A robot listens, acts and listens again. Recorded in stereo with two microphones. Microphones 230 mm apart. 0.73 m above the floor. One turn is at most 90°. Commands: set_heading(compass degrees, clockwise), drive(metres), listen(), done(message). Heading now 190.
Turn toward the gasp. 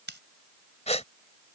set_heading(160)
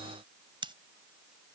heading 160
listen()
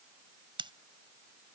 done("I heard a gasp, but can't make it out now. It was about straight ahead or 120° left.")